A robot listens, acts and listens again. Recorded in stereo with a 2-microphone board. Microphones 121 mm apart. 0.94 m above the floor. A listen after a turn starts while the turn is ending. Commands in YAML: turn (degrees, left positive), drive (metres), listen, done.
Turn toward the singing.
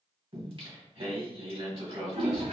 turn: -50
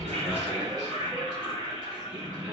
done: "Facing the singing, 2 to 4 m away."